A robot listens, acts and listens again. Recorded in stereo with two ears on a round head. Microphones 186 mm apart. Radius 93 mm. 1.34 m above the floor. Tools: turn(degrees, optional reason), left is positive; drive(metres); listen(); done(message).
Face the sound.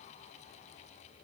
listen()
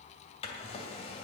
turn(degrees=30, reason="The drawer: about 30° left or 150° left.")
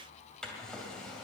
done("Facing the drawer, 2 to 4 m away.")